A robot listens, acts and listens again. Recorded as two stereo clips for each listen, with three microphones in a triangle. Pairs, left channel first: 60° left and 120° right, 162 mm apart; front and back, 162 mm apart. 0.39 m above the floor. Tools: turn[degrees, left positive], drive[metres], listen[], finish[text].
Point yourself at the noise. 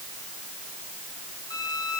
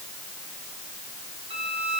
Thought: The violin: 125° left.
Action: turn[125]
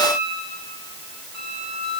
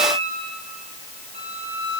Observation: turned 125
Action: finish[Facing the violin, over 4 m away.]